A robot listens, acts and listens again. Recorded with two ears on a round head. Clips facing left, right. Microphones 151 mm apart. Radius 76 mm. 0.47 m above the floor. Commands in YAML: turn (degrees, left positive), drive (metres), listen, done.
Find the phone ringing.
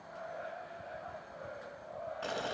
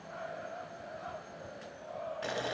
listen: true
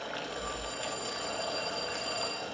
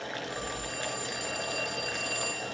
turn: -55
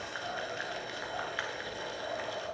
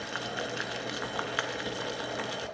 listen: true
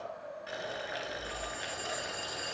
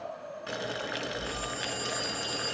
done: "Facing the phone ringing."